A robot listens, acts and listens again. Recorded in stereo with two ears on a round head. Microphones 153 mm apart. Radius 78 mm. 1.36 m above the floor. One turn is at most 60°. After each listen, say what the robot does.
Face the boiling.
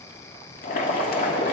Turn 55° left.
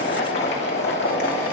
Turn 60° left.
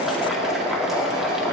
Facing the boiling, 2 to 4 m away.